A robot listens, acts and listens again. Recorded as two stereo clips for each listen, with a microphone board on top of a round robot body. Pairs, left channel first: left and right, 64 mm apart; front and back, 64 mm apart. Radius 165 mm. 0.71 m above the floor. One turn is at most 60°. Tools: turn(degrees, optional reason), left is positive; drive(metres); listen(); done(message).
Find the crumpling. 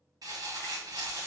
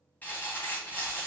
turn(degrees=-60, reason="The crumpling: 70° right.")
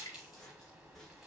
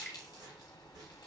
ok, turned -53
turn(degrees=-15, reason="The crumpling is now 15° right.")
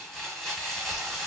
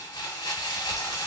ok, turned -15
done("Facing the crumpling.")